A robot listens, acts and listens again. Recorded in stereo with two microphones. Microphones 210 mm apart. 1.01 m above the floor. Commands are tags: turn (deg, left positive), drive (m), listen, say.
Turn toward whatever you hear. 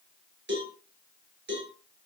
<turn deg="-70"/>
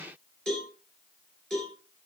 <say>Found it: a cowbell, straight ahead.</say>